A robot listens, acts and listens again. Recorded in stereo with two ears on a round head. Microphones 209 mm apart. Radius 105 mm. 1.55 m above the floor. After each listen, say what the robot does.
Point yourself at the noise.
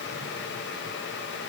Keep listening.
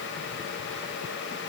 Keep listening.
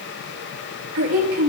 Turn 70° right.
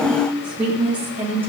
Turn 10° right.
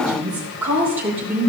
Turn 10° right.
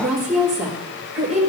Found it: a woman speaking, straight ahead, over 4 m away.